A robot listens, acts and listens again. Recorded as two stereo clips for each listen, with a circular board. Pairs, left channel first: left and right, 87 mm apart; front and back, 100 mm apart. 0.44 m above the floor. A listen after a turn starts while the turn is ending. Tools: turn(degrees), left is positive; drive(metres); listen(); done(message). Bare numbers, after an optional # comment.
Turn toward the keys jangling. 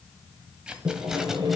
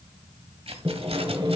# The keys jangling: 170° right.
turn(-170)
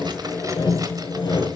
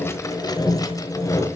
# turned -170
listen()
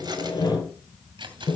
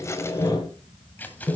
# The keys jangling is now 75° right.
turn(-75)
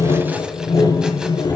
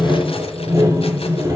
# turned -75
listen()
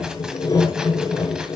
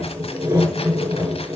listen()
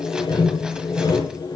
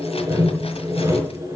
done("Facing where the keys jangling came from. I can't hear it now.")